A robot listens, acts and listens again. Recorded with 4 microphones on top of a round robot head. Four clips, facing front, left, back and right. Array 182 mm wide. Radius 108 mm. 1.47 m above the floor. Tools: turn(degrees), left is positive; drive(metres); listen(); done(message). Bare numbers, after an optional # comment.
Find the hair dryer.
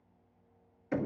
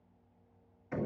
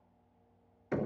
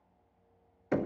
listen()
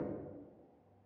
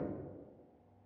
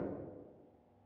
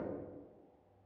listen()
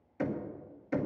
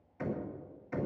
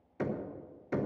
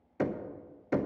done("I can't make out a hair dryer to turn to.")